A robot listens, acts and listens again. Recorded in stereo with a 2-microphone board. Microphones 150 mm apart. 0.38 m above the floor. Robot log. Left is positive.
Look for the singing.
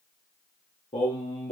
note: The singing: about 45° left or 135° left.
cmd yaw +45
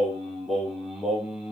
end: Found it: singing, straight ahead, 2 to 4 m away.